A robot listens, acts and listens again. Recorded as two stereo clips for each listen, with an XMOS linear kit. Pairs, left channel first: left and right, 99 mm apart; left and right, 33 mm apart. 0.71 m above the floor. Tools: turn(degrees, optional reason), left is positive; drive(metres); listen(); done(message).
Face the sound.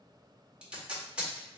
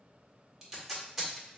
turn(degrees=-30)
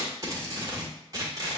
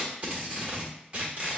turn(degrees=-140, reason="So it is at 140° right.")
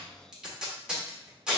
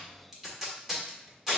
turn(degrees=-10, reason="The tape being pulled is now 10° right.")
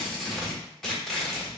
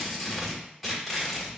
done("Found it: tape being pulled, straight ahead.")